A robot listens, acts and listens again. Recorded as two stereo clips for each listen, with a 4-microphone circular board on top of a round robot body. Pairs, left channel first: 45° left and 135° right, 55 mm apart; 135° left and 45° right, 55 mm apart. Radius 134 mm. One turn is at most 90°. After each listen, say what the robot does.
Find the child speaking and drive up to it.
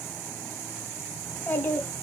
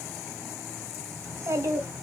Turn 15° right.
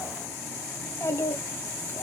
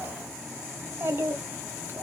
Drive 1.0 m forward.
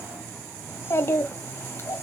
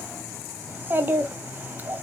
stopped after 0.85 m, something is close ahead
I am next to the child speaking.